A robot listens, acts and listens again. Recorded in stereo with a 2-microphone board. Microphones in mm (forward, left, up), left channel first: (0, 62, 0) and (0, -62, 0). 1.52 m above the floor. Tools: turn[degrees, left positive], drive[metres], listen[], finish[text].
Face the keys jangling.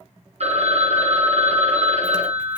Action: listen[]
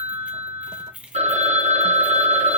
Action: turn[-30]
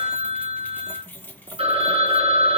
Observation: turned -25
Thought: So it is at 15° left.
Action: turn[15]
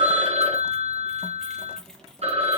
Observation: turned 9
Action: listen[]
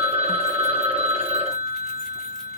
Action: listen[]
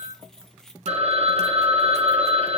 Action: finish[Found it: keys jangling, straight ahead.]